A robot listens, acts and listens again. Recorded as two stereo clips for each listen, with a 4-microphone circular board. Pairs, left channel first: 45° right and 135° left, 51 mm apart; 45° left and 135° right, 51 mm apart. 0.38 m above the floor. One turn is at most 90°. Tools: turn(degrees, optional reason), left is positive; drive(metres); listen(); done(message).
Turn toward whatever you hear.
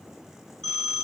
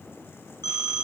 turn(degrees=35, reason="The phone ringing: 35° left.")
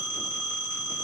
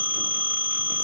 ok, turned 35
done("Found it: a phone ringing, straight ahead.")